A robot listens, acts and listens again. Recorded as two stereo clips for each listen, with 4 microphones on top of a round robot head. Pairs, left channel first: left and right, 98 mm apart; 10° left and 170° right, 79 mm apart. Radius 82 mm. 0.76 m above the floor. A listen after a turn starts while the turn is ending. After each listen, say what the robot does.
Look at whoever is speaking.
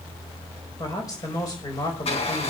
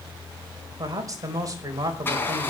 Turn 145° left.
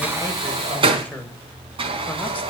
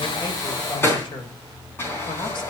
Keep listening.
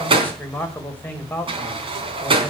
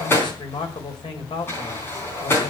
Turn 15° left.
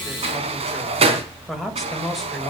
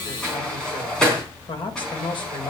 Found it: a man speaking, straight ahead, over 4 m away.